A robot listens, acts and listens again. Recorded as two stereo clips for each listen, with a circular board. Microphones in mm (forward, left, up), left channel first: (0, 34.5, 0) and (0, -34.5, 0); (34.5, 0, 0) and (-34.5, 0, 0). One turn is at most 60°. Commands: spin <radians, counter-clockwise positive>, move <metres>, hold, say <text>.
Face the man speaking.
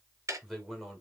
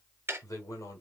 say Facing the man speaking, 1 to 2 m away.